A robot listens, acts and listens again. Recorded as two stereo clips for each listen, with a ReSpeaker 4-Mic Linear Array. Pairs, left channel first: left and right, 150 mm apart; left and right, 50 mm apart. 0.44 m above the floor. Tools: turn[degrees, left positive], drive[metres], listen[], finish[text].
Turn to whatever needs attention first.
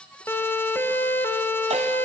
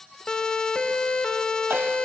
Action: turn[30]
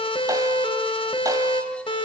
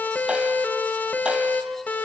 Thought: So it is at 135° left.
Action: turn[135]
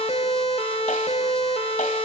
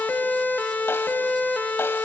Thought: The siren is now 50° left.
Action: turn[50]
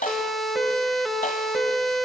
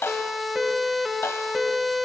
Action: finish[Facing the siren, 2 to 4 m away.]